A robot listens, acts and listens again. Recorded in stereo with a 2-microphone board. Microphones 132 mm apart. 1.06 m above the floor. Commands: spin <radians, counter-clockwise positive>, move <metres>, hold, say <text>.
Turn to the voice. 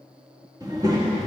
spin -0.44
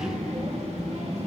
spin -2.18
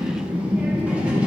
spin -0.17
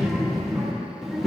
say Found it: a child speaking, straight ahead.